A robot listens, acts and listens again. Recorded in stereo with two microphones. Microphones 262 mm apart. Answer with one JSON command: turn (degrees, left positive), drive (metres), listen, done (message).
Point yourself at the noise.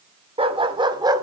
{"turn": -30}
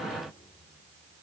{"listen": true}
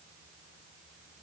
{"listen": true}
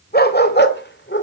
{"turn": 45}
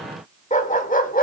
{"turn": 35}
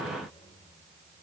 {"listen": true}
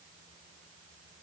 {"listen": true}
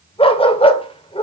{"turn": 20}
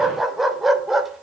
{"done": "Facing the dog barking."}